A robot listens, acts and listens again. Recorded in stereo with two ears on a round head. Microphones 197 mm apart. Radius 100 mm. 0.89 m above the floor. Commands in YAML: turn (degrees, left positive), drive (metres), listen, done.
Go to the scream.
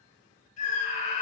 turn: 35
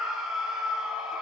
drive: 1.0
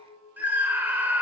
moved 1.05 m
turn: -10
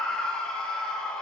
drive: 1.0
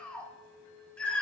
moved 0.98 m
drive: 1.0
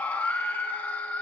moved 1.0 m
turn: 10
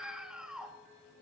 drive: 1.0
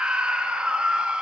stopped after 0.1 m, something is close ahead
done: "Arrived at the scream, straight ahead."